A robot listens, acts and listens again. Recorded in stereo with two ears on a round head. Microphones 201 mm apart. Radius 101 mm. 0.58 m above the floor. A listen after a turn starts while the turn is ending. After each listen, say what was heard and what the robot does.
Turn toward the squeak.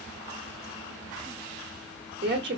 Keep listening.
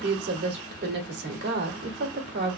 Keep listening.
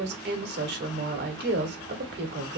I can't make out a squeak, only a woman speaking.